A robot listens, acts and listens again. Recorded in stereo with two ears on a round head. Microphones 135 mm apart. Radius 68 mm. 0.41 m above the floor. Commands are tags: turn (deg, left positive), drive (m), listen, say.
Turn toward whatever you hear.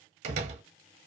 <turn deg="-50"/>
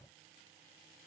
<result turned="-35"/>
<listen/>
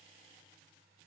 <say>I heard a door slam, but can't make it out now. It was about 15° right or 95° right.</say>